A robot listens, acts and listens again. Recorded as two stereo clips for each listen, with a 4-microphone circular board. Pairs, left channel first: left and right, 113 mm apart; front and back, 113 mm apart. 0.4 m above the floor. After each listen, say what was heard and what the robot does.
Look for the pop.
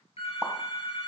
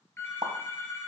The pop: 165° right. Turn 165° right.
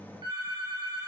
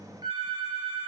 Facing where the pop came from. I can't hear it now.